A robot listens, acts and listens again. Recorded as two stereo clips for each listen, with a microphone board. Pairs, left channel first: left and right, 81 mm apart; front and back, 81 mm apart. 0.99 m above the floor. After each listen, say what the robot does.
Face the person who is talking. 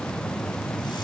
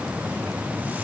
Keep listening.
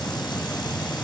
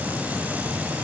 Keep listening.
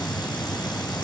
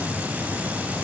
I can't make out anyone speaking.